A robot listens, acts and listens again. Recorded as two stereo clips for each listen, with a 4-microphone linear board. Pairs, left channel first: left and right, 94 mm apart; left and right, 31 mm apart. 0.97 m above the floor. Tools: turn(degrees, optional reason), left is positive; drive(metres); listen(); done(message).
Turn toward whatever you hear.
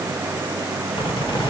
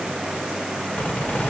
turn(degrees=60, reason="The squeak: about 60° left or 120° left.")
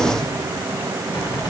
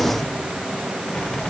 listen()
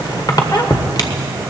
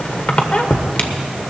turn(degrees=55, reason="So it is at 55° left.")
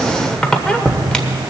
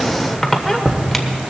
turn(degrees=10, reason="The squeak is now 10° left.")
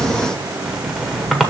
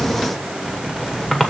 done("Facing the squeak.")